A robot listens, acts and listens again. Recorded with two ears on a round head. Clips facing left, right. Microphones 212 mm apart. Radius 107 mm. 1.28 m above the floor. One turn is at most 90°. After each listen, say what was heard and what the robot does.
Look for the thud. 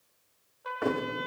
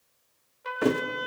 The thud: about 50° right or 130° right. Turn 50° right.
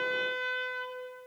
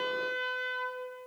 Keep listening.
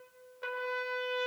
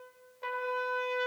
I heard a thud, but can't make it out now. It was about straight ahead or 80° right.